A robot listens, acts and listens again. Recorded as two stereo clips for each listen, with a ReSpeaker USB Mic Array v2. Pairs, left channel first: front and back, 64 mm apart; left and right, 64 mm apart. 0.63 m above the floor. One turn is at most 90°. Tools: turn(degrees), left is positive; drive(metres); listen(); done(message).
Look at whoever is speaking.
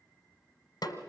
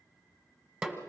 listen()
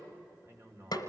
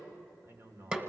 turn(degrees=-90)
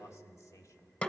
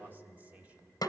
turn(degrees=-20)
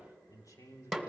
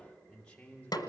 turn(degrees=25)
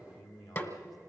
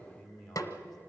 turn(degrees=10)
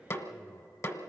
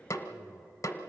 listen()
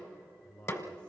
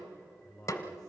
turn(degrees=15)
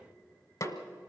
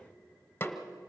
listen()
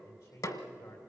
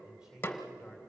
done("Facing the man speaking, 2 to 4 m away.")